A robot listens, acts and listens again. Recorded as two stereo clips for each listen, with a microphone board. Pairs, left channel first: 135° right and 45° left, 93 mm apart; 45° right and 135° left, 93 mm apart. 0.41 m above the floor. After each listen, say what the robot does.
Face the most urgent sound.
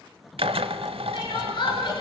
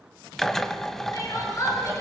Turn 100° right.
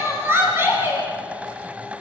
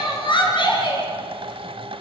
Turn 20° right.
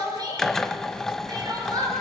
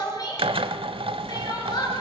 Facing the crying, over 4 m away.